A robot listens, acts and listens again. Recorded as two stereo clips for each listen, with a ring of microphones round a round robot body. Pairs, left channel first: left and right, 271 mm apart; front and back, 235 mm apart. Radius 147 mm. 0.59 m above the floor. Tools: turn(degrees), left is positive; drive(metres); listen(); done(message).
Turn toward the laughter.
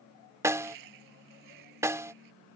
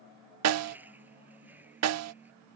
turn(degrees=-95)
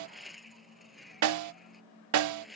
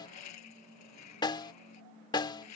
done("Found it: laughter, straight ahead.")